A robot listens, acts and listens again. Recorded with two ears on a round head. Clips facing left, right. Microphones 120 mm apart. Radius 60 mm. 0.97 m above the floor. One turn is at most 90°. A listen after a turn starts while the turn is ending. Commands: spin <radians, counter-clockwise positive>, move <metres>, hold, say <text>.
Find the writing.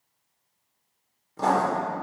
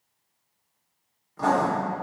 spin 0.61
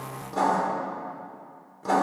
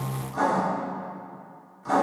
spin 1.57
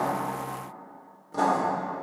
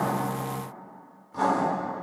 spin 0.87
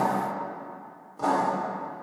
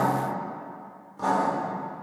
say Found it: writing, straight ahead, 2 to 4 m away.